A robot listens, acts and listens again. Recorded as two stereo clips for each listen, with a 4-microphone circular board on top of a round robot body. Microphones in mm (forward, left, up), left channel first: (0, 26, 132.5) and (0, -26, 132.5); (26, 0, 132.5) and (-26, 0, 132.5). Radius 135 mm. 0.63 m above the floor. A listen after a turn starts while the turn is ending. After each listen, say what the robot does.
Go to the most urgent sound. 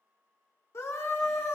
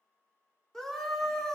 Turn 80° left.
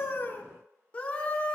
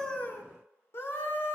Turn 30° left.
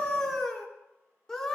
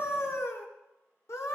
Turn 10° left.
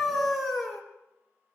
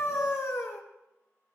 Drive 1.0 m forward.
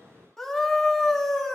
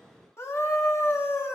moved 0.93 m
Turn 10° left.
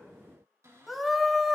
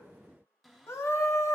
Drive 1.0 m forward.
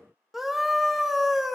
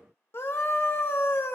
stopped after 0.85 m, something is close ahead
I am next to the scream.